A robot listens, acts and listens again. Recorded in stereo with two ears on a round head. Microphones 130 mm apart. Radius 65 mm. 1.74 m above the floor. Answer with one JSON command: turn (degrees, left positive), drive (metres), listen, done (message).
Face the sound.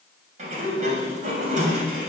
{"turn": -55}
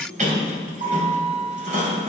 {"turn": -60}
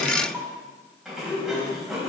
{"done": "Found it: a sliding door, straight ahead, 2 to 4 m away."}